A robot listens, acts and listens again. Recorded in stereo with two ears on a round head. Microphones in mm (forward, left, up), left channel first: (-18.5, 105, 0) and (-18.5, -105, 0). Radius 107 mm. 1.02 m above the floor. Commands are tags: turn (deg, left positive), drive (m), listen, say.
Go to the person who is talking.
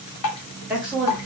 <turn deg="-30"/>
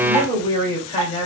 <turn deg="25"/>
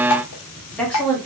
<drive m="1.0"/>
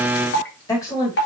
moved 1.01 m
<turn deg="15"/>
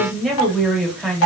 <drive m="1.0"/>
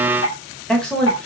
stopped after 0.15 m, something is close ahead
<say>I am next to the woman speaking.</say>